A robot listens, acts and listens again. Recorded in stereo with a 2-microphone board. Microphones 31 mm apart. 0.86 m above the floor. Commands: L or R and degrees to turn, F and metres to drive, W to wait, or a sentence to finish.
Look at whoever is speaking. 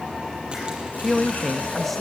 L30
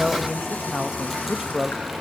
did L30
R20
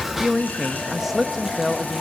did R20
R10
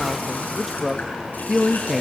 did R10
Found it: a man speaking, straight ahead, under 1 m away.